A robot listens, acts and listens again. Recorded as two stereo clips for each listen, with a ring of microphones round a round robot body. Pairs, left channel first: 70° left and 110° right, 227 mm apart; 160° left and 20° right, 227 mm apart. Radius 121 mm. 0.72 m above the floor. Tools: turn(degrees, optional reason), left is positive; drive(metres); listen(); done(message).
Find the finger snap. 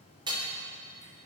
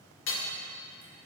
listen()
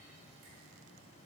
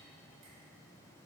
listen()
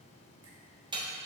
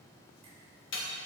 done("I can't make out a finger snap, only hammering.")